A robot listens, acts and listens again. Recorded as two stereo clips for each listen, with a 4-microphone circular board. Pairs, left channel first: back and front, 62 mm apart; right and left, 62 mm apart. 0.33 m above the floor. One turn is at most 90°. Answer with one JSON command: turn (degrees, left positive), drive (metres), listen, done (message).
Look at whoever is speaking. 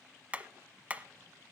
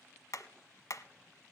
{"listen": true}
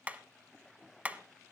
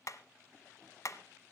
{"listen": true}
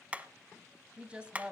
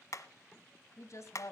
{"turn": -75}
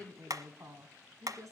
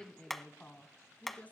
{"turn": -25}
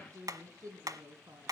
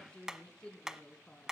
{"turn": -20}
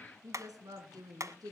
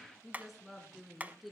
{"done": "Facing the woman speaking."}